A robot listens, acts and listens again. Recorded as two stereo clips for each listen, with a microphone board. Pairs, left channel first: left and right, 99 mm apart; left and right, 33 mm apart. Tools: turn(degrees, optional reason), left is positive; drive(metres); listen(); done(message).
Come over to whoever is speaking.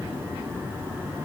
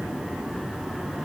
listen()
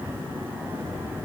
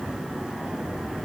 listen()
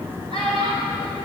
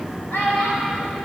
turn(degrees=90)
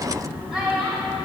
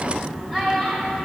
drive(metres=1.0)
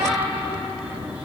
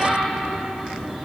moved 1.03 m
drive(metres=1.0)
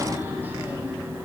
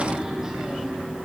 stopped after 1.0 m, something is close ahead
listen()
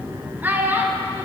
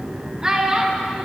turn(degrees=-20, reason="The child speaking is now 20° right.")
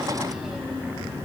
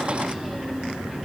listen()
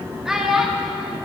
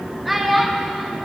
done("I am next to the child speaking.")